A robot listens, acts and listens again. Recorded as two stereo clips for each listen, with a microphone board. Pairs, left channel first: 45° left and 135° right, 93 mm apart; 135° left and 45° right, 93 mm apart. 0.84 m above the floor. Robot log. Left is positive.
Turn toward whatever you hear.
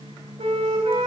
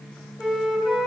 note: The flute: 130° right.
cmd yaw -130
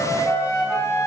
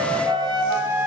note: The flute is now 10° right.
cmd yaw -10
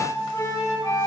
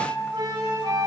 end: Facing the flute, over 4 m away.